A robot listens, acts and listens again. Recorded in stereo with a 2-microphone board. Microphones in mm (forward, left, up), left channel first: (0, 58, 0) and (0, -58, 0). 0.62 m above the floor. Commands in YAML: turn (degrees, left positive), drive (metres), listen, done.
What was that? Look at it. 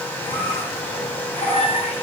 turn: 90
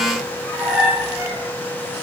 done: "Facing the squeak."